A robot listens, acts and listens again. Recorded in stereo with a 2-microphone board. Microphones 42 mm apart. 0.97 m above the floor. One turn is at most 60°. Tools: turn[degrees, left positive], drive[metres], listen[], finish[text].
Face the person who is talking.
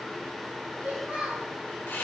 Thought: The child speaking: about 30° right or 150° right.
Action: turn[-30]
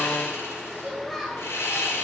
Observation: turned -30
Action: finish[Found it: a child speaking, straight ahead.]